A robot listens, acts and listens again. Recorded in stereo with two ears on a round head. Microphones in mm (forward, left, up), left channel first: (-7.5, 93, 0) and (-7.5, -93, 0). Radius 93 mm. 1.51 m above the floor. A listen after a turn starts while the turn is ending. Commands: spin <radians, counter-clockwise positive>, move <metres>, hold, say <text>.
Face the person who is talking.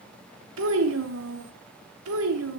spin -1.57
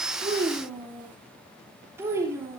spin -0.26
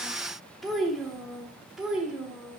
say Facing the child speaking, 2 to 4 m away.